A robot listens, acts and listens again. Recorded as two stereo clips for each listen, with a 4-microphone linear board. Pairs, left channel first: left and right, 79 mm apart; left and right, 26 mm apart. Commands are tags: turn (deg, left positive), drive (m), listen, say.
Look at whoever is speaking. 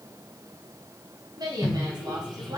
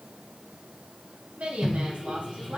<turn deg="-60"/>
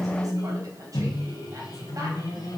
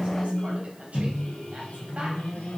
<listen/>
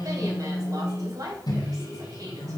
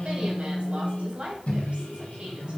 <turn deg="-55"/>
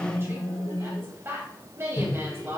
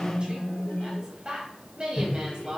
<turn deg="-35"/>
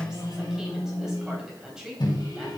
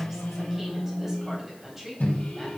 <turn deg="-10"/>
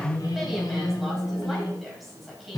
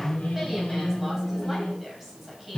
<say>Facing the woman speaking, 2 to 4 m away.</say>